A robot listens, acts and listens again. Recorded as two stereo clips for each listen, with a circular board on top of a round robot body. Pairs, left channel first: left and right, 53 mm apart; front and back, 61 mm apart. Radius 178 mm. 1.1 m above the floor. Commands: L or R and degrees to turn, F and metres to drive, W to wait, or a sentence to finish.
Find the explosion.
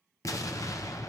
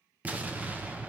L110
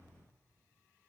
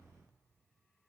I heard an explosion from this way, but can't make it out now.